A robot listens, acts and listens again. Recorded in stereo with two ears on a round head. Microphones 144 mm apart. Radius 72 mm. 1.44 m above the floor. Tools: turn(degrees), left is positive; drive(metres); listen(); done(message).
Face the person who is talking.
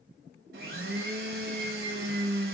listen()
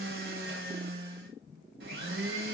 listen()
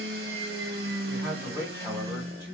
turn(degrees=-20)
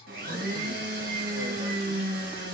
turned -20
listen()
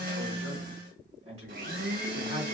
turn(degrees=-135)
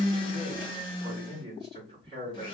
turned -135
turn(degrees=-30)
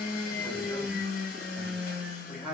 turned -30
done("Found it: a man speaking, straight ahead.")